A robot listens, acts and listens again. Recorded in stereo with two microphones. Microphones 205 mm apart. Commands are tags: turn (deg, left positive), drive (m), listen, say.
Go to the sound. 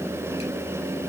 <listen/>
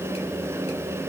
<listen/>
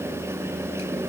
<say>I can't make out anything.</say>